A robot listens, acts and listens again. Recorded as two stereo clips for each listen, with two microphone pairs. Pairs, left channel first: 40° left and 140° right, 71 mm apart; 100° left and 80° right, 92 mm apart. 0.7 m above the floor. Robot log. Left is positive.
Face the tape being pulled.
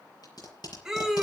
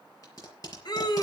note: The tape being pulled: 50° left.
cmd yaw +50
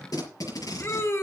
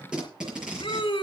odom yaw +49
end: Facing the tape being pulled, over 4 m away.